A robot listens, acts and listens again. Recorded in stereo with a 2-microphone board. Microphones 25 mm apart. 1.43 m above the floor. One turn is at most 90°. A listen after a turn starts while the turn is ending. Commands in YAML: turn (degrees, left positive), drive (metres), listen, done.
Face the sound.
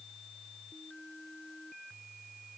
listen: true
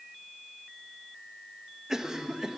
turn: -20
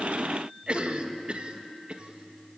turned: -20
turn: -90
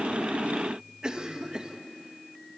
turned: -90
turn: -35
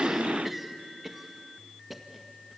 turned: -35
turn: -10
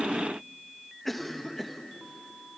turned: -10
done: "Found it: a cough, straight ahead."